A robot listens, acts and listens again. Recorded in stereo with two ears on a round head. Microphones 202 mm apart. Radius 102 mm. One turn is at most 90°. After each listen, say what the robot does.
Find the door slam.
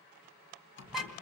Turn 55° left.
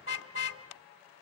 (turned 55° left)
Keep listening.
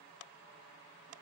I heard a door slam, but can't make it out now. It was about straight ahead or 70° left.